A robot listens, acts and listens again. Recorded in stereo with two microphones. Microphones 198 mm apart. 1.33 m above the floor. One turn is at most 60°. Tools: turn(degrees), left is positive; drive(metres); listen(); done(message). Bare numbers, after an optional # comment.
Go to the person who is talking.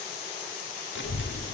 # The child speaking: about 70° left or 110° left.
turn(60)
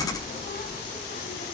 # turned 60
# So it is at 50° left.
turn(50)
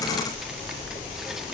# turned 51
drive(1.0)
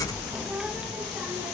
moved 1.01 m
drive(1.0)
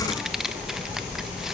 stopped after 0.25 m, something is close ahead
done("Arrived at the child speaking, straight ahead.")